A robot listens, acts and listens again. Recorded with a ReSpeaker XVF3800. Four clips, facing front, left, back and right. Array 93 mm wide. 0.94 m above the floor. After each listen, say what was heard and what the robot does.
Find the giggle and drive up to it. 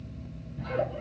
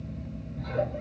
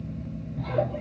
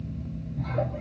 The giggle: 170° right. Turn 170° right.
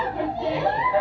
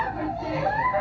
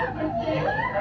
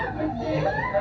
The giggle is now 15° left. Turn 15° left.
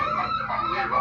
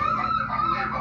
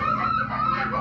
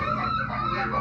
Drive 1.0 m forward.
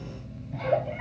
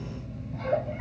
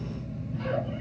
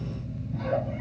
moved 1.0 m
Drive 1.0 m forward.
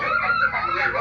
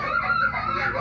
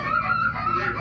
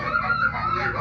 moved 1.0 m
Drive 1.0 m forward.
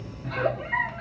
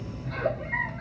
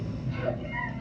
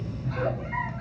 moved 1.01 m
The giggle is now 10° right. Turn 10° right.
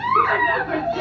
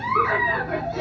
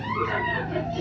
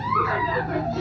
Drive 1.0 m forward.
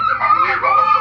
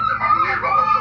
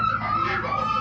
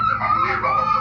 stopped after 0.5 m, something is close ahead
Arrived at the giggle, straight ahead.